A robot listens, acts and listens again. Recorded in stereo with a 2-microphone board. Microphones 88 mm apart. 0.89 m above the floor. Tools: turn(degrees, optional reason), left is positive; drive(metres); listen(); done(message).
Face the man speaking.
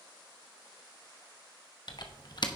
listen()
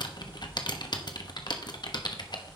listen()
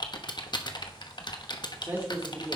turn(degrees=-20, reason="The man speaking: about 20° right or 160° right.")
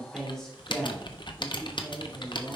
done("Found it: a man speaking, straight ahead, 2 to 4 m away.")